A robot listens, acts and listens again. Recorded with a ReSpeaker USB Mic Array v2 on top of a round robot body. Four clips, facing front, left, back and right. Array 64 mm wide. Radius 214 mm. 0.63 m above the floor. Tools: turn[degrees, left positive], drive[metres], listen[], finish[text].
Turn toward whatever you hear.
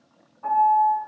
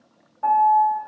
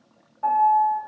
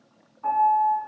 Thought: The piano: 120° left.
Action: turn[120]
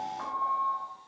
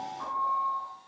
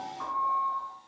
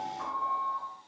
Thought: The piano is now 20° right.
Action: turn[-20]
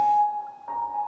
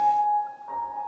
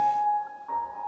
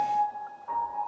Action: finish[Found it: a piano, straight ahead, 2 to 4 m away.]